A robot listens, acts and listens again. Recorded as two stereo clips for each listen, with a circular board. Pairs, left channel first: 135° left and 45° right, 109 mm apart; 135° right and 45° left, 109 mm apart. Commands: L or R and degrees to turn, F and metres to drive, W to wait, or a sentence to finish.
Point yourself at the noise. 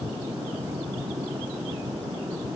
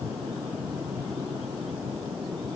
W
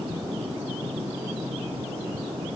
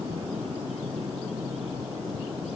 W
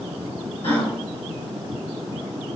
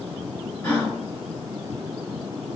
L160
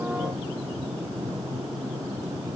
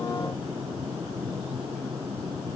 Facing where the gasp came from. I can't hear it now.